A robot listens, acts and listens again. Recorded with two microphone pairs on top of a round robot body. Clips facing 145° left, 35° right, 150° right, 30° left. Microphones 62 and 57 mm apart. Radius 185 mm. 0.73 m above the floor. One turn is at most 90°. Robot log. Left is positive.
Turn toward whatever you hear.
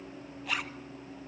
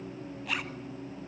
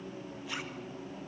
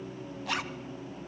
note: The zipper: 55° left.
cmd yaw +55
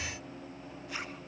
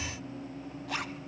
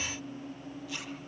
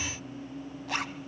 end: Found it: a zipper, straight ahead.